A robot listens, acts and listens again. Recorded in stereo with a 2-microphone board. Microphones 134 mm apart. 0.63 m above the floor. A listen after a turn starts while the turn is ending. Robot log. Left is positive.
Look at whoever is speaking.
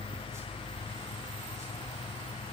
cmd idle
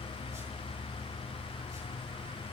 cmd idle
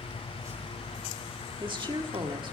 note: The woman speaking: about 35° right or 145° right.
cmd yaw -35
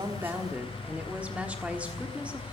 note: So it is at 10° right.
cmd yaw -10
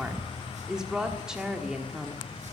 end: Facing the woman speaking, 1 to 2 m away.